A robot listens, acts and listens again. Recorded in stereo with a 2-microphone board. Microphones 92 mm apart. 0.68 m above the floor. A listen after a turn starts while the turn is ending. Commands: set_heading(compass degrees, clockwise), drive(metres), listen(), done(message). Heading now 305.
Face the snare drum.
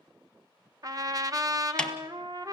set_heading(275)
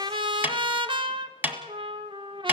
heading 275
set_heading(295)
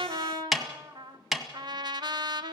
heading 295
done("Facing the snare drum, 1 to 2 m away.")